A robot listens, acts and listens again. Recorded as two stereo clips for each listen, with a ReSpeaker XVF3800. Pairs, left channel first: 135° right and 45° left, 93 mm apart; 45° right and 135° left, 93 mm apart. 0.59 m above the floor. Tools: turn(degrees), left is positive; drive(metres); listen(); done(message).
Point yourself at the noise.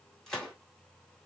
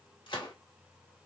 turn(degrees=-50)
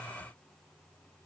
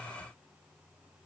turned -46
done("Facing where the gunshot came from. I can't hear it now.")